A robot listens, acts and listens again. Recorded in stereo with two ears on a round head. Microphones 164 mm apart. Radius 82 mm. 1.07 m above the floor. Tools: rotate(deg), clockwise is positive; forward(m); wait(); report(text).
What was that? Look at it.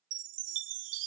rotate(90)
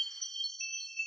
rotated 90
report("Facing the chime.")